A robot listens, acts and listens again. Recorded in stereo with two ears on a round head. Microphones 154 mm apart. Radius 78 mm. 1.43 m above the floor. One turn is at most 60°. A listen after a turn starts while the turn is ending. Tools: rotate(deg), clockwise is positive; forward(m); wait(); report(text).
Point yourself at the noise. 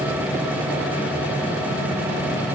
wait()
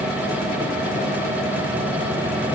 wait()
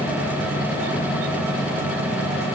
report("I can't make out anything.")